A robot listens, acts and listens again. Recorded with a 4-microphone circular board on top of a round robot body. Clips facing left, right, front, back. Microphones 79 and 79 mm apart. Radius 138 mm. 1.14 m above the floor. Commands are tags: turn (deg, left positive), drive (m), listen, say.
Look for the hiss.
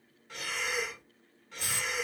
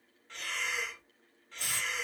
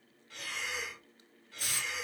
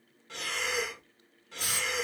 <turn deg="-110"/>
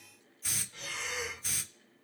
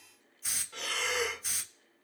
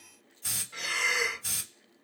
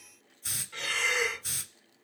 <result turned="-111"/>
<say>Facing the hiss.</say>